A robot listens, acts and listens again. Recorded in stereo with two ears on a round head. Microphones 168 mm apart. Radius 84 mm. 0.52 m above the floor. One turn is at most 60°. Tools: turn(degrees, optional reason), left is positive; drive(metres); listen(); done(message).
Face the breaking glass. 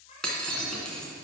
turn(degrees=30)
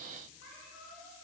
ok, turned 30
listen()
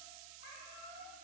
done("I heard breaking glass, but can't make it out now. It was about 25° right or 145° left.")